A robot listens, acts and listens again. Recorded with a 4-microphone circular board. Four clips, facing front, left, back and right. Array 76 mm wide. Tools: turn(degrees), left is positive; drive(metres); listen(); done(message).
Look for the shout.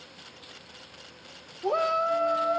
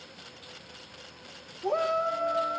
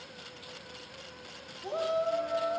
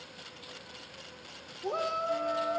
turn(degrees=15)
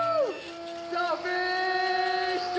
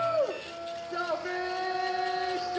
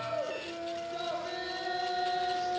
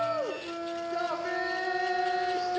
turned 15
done("Facing the shout, 1 to 2 m away.")